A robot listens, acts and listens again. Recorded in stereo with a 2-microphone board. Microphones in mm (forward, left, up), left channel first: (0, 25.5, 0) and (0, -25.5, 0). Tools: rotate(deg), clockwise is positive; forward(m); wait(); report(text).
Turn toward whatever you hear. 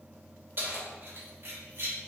rotate(55)
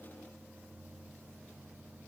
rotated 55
wait()
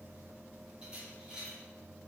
rotate(15)
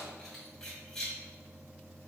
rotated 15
rotate(-10)
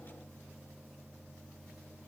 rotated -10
wait()
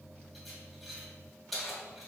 report("Found it: keys jangling, straight ahead, 2 to 4 m away.")